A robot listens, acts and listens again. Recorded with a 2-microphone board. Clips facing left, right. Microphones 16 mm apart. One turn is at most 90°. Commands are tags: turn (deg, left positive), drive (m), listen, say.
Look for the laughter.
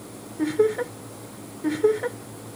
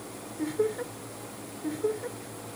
<turn deg="50"/>
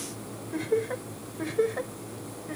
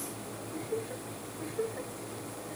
<turn deg="45"/>
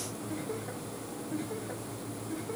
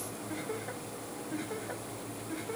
<turn deg="-15"/>
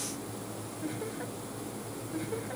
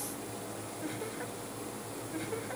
<say>Found it: laughter, straight ahead.</say>